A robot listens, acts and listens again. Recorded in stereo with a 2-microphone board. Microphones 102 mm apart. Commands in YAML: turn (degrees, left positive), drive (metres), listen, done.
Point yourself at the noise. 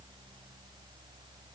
listen: true
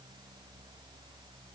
listen: true
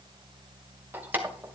turn: -15
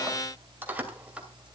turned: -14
turn: -30
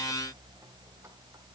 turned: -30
listen: true
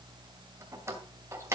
turn: -25
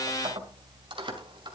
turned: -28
turn: -130
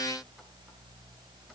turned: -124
listen: true
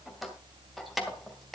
done: "Found it: keys jangling, straight ahead, 2 to 4 m away."